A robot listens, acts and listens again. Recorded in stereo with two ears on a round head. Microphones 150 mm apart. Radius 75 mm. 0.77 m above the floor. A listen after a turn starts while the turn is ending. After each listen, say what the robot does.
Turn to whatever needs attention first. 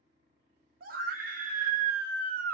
Turn 55° right.
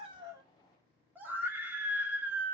Turn 15° right.
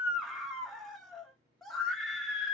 Found it: a scream, straight ahead.